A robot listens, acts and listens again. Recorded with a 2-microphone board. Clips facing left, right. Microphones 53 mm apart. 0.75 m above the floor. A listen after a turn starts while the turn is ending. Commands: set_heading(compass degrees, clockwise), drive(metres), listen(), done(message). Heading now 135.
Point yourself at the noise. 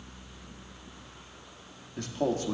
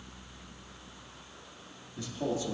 set_heading(80)
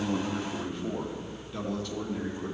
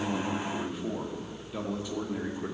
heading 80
set_heading(100)
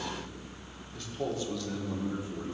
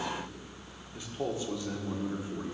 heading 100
set_heading(125)
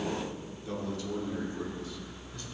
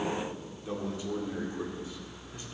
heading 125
set_heading(145)
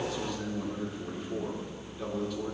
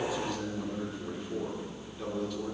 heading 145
done("Found it: a man speaking, straight ahead, 1 to 2 m away.")